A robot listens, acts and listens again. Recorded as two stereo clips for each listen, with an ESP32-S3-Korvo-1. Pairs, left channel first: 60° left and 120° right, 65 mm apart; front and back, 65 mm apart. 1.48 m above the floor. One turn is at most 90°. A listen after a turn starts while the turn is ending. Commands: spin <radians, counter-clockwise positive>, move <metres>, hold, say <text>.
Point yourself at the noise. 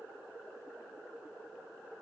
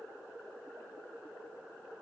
hold
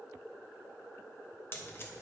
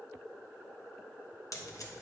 spin 0.17
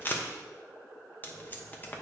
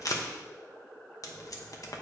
say Found it: tape being pulled, straight ahead.